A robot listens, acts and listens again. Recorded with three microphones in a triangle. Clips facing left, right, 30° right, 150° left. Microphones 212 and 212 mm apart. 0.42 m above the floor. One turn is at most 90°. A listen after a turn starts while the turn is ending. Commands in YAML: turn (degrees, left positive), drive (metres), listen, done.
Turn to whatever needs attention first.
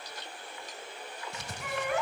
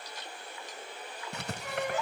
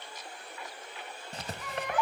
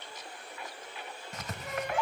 turn: 90
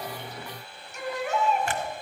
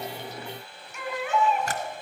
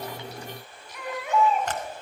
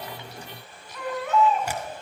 turn: 45
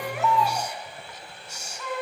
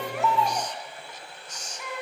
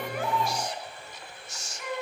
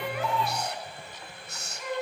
turn: -15
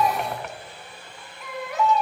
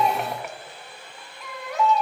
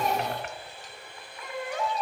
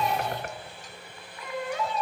done: "Found it: a baby crying, straight ahead, 2 to 4 m away."